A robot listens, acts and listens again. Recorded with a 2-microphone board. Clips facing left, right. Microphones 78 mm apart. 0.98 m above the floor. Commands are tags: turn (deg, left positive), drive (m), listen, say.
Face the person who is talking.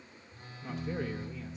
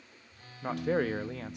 <turn deg="-75"/>
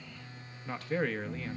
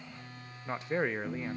<turn deg="-20"/>
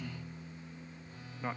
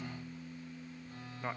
<say>Found it: a man speaking, straight ahead.</say>